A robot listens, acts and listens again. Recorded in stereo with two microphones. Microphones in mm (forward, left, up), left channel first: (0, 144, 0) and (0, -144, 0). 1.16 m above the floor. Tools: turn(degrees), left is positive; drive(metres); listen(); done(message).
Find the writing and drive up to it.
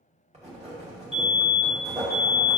turn(degrees=-20)
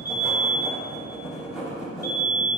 drive(metres=1.0)
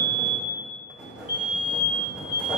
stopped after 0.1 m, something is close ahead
done("Something is in my way. I am facing the writing but have not reached it.")